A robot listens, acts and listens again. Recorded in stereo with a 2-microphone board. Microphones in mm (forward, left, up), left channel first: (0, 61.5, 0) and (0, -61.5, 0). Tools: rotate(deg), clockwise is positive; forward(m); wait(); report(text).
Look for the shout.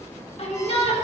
rotate(-55)
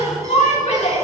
rotate(-70)
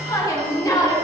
rotate(-30)
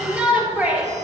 rotate(10)
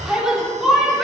report("Found it: a shout, straight ahead, 2 to 4 m away.")